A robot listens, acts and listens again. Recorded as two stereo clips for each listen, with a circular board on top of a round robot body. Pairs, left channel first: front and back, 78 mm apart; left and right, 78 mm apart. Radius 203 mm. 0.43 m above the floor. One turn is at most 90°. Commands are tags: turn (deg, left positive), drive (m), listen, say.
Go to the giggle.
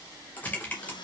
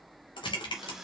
<listen/>
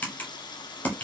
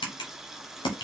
<listen/>
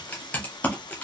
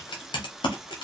<say>I can't make out a giggle to turn to.</say>